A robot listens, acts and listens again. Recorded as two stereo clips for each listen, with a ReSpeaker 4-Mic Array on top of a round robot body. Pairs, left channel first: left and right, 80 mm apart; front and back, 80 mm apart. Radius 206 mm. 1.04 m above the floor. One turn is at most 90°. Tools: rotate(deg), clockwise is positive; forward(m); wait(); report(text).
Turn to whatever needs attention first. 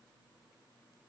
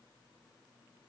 wait()
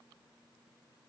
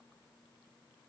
wait()
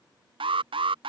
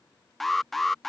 rotate(85)
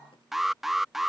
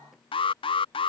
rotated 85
report("Found it: an alarm, straight ahead.")